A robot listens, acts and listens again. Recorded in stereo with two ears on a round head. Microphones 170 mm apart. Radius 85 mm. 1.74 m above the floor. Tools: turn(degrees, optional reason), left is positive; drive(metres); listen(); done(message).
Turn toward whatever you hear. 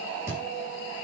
turn(degrees=-30)
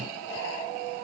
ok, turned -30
listen()
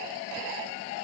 done("I heard a thud, but can't make it out now. It was about 20° left or 140° right.")